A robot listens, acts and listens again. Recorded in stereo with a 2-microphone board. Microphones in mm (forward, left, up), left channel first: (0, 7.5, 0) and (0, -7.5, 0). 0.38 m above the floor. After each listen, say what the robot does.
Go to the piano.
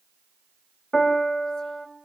Turn 30° left.
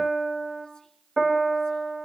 Turn 15° right.
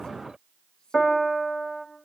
Drive 1.0 m forward.
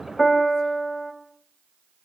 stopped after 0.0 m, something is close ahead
Blocked. The piano is further on, straight ahead.